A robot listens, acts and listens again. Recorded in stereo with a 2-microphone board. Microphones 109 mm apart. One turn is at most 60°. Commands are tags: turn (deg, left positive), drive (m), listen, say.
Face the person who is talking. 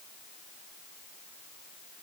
<listen/>
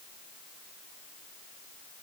<listen/>
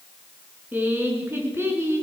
<turn deg="-25"/>
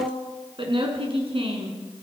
<turn deg="-60"/>
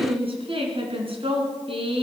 <turn deg="-55"/>
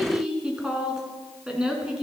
<say>Found it: a woman speaking, straight ahead, 2 to 4 m away.</say>